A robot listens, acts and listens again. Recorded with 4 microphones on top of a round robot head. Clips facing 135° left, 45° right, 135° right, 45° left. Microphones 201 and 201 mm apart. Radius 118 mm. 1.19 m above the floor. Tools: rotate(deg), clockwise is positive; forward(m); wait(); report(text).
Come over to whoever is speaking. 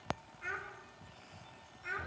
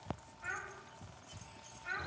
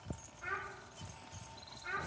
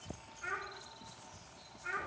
rotate(-115)
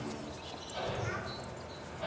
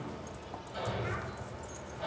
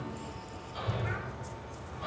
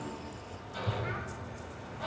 wait()
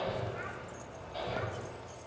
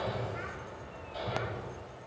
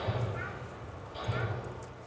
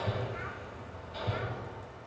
wait()
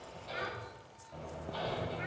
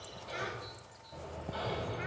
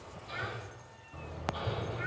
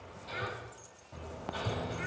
report("Facing where the child speaking came from. I can't hear it now. I did not reach it.")